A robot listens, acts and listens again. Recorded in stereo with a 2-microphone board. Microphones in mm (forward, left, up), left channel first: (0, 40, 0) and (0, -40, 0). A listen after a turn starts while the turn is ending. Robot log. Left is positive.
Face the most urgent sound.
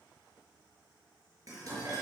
cmd idle
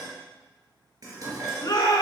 note: The shout: about 45° left or 135° left.
cmd yaw +45
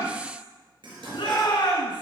note: So it is at 90° left.
cmd yaw +90
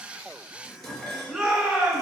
end: Found it: a shout, straight ahead, over 4 m away.